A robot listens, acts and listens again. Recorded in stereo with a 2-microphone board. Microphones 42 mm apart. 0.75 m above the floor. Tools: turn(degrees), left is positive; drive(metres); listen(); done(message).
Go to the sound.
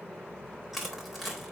turn(degrees=-30)
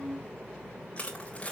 turn(degrees=30)
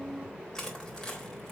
turn(degrees=10)
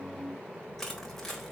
drive(metres=1.0)
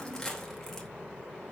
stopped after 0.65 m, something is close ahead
turn(degrees=10)
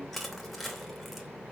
done("Blocked. The crushing is further on, straight ahead.")